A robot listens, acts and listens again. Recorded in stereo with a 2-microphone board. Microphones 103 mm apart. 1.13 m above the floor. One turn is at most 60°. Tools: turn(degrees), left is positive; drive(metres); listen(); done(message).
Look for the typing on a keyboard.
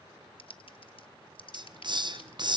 turn(degrees=60)
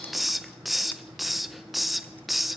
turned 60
listen()
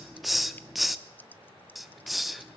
turn(degrees=20)
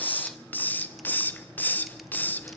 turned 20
listen()
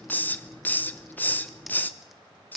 done("Found it: typing on a keyboard, straight ahead.")